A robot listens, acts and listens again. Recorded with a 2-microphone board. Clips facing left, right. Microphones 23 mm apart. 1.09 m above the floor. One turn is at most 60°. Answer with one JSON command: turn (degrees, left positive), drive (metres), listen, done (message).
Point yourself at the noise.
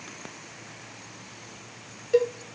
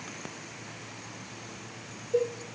{"turn": 60}
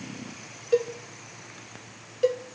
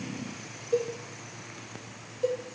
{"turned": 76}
{"turn": 45}
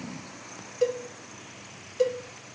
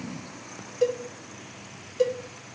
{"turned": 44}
{"done": "Found it: a cowbell, straight ahead, 1 to 2 m away."}